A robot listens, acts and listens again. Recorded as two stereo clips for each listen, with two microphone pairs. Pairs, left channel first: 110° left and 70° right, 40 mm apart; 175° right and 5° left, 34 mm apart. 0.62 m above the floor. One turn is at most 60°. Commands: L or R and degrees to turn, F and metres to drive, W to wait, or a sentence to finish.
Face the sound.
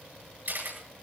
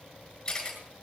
R60
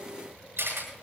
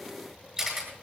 R60
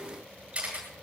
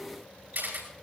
Found it: a camera shutter, straight ahead, over 4 m away.